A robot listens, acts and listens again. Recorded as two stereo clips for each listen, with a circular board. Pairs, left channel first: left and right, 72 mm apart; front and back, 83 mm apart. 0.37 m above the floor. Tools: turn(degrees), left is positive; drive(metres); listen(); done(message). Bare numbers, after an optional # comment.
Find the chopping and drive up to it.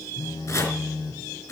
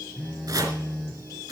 # The chopping: 135° left.
turn(135)
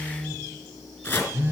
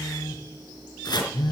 # The chopping is now 25° left.
turn(25)
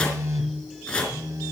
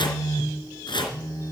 # The chopping is now 10° left.
turn(10)
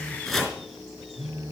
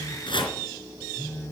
drive(1.0)
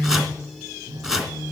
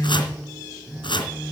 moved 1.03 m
# The chopping is now 10° right.
turn(-10)
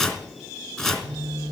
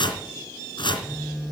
drive(1.0)
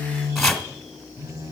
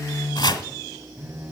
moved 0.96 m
drive(1.0)
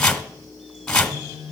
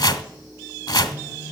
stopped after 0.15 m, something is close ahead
# The chopping is now 10° left.
turn(10)
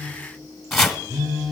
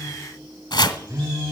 done("Arrived at the chopping, straight ahead.")